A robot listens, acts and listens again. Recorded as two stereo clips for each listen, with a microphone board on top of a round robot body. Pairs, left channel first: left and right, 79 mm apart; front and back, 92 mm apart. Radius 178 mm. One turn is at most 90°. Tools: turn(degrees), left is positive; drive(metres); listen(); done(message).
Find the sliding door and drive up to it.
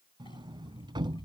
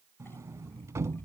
turn(degrees=-90)
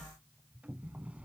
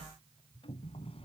turn(degrees=-15)
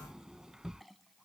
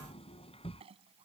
drive(metres=1.0)
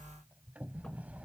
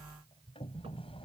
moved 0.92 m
turn(degrees=-15)
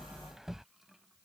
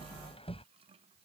drive(metres=1.0)
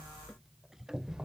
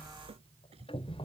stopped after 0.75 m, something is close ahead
done("Arrived at the sliding door, straight ahead.")